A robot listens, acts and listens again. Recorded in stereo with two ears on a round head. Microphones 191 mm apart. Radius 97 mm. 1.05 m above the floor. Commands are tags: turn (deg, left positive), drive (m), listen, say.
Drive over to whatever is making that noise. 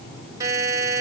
<turn deg="-15"/>
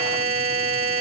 <turn deg="-150"/>
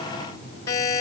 <turn deg="15"/>
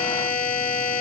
<drive m="1.0"/>
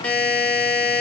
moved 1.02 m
<drive m="1.0"/>
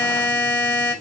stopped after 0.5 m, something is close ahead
<turn deg="10"/>
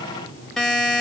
<say>Arrived at the buzzer, straight ahead.</say>